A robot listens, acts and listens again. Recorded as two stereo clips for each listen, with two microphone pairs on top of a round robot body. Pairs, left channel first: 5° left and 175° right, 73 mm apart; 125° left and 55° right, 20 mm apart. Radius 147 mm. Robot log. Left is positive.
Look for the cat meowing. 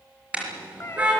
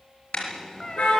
note: The cat meowing: 65° left.
cmd yaw +65
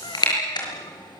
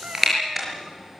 cmd idle
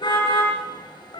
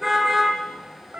note: The cat meowing is now 20° right.
cmd yaw -20
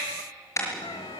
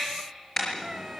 cmd idle
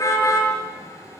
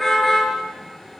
cmd idle
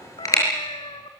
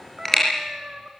end: Found it: a cat meowing, straight ahead.